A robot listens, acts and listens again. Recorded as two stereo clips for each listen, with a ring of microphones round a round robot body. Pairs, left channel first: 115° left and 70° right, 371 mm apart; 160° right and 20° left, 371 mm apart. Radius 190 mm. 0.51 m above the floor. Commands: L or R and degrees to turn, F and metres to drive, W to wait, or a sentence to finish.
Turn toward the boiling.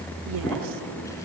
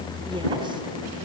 W
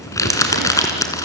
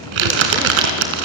W
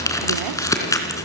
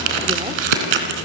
I can't make out boiling, only crumpling.